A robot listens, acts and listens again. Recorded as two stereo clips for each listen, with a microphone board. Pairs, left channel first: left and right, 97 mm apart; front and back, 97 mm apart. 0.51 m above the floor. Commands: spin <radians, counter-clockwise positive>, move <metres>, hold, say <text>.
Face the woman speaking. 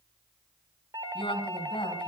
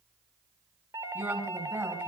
spin 2.01
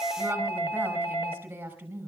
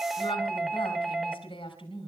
spin -0.35
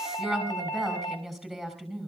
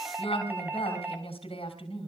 say Found it: a woman speaking, straight ahead, over 4 m away.